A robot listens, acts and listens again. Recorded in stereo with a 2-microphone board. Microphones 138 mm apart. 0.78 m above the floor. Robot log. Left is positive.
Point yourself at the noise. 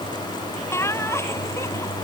note: The laughter: about 20° left or 160° left.
cmd yaw +20
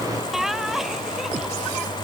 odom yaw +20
end: Found it: laughter, straight ahead.